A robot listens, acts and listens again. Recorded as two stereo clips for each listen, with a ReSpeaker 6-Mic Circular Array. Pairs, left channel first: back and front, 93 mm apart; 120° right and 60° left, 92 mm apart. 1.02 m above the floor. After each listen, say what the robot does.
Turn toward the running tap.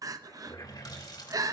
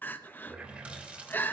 Turn 135° left.
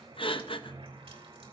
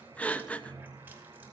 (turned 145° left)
Turn 10° right.
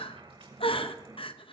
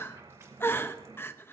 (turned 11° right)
Facing the running tap.